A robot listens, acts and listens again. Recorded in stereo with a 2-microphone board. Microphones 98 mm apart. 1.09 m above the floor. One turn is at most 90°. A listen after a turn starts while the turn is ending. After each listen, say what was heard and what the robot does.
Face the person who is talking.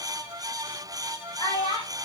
The child speaking: about 75° left or 105° left. Turn 75° left.
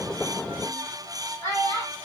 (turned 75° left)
So it is at 25° left. Turn 25° left.
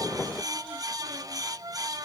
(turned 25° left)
Keep listening.
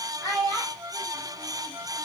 Found it: a child speaking, straight ahead, 2 to 4 m away.